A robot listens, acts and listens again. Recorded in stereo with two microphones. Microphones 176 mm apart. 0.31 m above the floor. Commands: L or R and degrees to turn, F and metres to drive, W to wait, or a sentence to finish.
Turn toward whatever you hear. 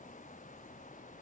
W
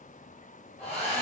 L40
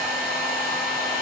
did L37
Facing the hair dryer.